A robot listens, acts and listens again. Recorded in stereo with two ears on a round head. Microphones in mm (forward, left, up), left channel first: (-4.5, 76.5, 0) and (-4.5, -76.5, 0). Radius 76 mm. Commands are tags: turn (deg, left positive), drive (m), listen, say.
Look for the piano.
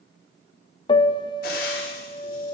<turn deg="30"/>
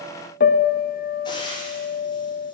<turn deg="120"/>
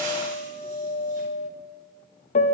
<turn deg="45"/>
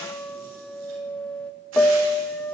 <say>Facing the piano.</say>